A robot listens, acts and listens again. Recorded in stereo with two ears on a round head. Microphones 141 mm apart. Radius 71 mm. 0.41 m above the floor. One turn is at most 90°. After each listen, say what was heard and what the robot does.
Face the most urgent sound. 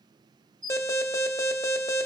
The alarm: about 20° left or 160° left. Turn 20° left.
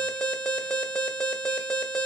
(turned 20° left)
Facing the alarm, under 1 m away.